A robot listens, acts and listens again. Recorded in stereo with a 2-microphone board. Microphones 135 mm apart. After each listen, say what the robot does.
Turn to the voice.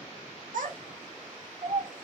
Turn 65° right.
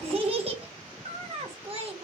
Turn 45° right.
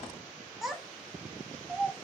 Facing the child speaking.